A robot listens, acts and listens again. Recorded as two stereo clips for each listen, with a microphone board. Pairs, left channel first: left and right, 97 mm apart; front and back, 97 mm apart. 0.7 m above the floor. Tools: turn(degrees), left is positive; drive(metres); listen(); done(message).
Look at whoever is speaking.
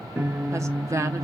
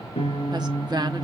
turn(degrees=-145)
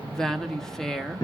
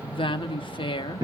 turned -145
done("Found it: a woman speaking, straight ahead.")